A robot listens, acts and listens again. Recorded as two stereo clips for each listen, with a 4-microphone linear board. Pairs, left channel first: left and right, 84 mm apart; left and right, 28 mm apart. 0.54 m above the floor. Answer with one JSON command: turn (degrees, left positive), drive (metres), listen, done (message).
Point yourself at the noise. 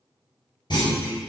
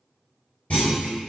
{"turn": 65}
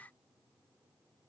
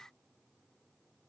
{"listen": true}
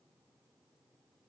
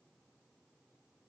{"done": "I heard a clunk, but can't make it out now. It was about straight ahead or 50° left."}